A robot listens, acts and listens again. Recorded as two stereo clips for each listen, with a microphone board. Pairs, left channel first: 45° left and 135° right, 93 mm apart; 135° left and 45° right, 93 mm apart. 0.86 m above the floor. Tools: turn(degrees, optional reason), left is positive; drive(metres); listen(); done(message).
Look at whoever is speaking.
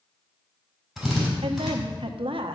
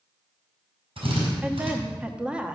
turn(degrees=-125, reason="The woman speaking: 125° right.")
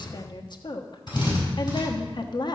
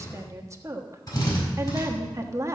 turn(degrees=10, reason="The woman speaking is now 10° left.")
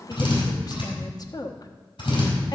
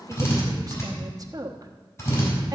done("Found it: a woman speaking, straight ahead.")